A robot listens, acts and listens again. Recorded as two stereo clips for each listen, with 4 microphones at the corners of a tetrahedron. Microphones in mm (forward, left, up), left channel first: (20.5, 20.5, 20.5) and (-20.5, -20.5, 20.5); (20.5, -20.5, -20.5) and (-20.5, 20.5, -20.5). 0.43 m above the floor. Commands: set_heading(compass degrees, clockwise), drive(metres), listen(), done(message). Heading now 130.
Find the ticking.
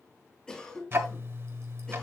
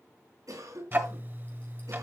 set_heading(305)
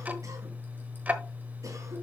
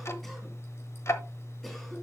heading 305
set_heading(20)
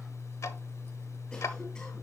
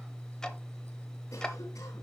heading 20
set_heading(350)
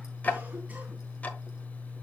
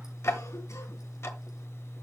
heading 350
set_heading(5)
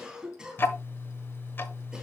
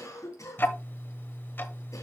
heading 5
done("Found it: ticking, straight ahead, 1 to 2 m away.")